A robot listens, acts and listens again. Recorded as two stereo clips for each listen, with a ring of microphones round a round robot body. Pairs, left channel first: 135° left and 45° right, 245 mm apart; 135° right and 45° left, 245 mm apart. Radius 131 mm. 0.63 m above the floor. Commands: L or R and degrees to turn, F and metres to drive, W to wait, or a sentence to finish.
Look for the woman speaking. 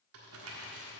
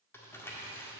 W
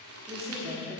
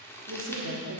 L20
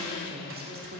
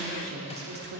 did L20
Found it: a woman speaking, straight ahead, 1 to 2 m away.